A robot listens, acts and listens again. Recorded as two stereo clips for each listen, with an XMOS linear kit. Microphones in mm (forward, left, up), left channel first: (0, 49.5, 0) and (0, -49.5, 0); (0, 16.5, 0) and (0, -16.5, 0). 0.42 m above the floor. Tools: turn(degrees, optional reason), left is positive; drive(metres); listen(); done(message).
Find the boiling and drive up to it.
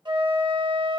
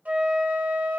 listen()
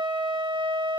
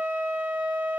listen()
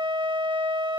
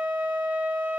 done("I can't make out boiling, only a flute.")